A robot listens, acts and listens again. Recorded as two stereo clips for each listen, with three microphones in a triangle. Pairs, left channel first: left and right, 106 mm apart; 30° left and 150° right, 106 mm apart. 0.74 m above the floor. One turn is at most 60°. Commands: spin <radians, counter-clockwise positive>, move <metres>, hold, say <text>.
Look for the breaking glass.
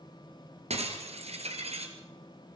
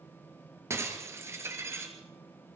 spin -1.05
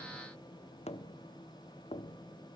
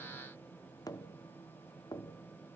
spin -0.44
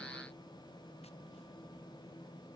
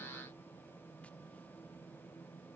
say I heard breaking glass from this way, but can't make it out now.